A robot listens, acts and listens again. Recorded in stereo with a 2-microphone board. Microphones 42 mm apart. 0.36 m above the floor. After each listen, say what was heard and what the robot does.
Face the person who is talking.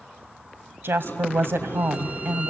The woman speaking: about 65° right or 115° right. Turn 65° right.
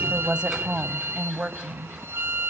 So it is at 25° right. Turn 25° right.
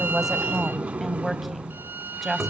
Found it: a woman speaking, straight ahead, 1 to 2 m away.